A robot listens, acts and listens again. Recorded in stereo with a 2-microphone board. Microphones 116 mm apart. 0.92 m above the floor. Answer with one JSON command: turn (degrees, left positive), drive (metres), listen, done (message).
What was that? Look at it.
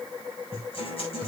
{"turn": 60}
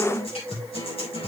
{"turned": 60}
{"turn": 60}
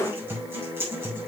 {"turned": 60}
{"turn": -25}
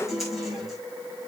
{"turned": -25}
{"done": "Facing the guitar."}